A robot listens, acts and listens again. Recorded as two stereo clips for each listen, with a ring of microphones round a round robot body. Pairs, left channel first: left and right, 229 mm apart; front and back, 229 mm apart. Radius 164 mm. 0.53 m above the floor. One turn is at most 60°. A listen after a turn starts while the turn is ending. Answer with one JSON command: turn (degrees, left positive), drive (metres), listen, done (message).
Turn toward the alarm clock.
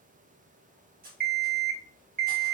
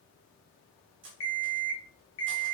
{"turn": -45}
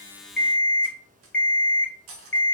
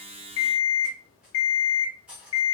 {"done": "Facing the alarm clock."}